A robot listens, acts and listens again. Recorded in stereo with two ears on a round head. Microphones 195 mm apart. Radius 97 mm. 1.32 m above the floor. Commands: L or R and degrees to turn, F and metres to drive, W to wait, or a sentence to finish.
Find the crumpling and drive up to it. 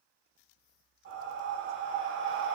W
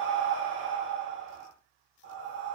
W
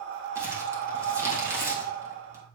R30
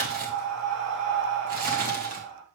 R135
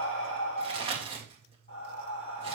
R25
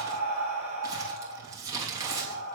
R15
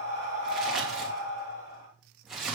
F1.0
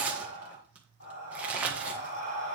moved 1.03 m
F1.0
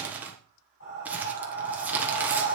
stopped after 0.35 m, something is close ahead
R10
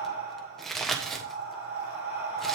I am next to the crumpling.